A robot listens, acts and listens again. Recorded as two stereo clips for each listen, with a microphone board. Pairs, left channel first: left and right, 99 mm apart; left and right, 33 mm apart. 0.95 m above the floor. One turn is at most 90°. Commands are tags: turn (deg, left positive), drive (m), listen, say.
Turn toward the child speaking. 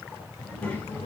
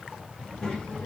<turn deg="15"/>
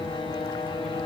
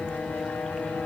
<listen/>
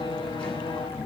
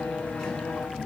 <turn deg="30"/>
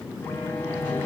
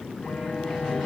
<turn deg="-10"/>
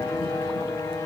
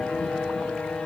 <listen/>
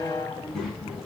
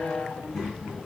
<say>Found it: a child speaking, straight ahead, over 4 m away.</say>